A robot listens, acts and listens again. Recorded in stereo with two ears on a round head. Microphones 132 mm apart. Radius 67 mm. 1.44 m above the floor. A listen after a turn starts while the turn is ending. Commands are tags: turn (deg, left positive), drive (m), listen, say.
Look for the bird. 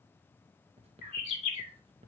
<turn deg="45"/>
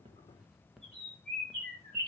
<say>Found it: a bird, straight ahead, 2 to 4 m away.</say>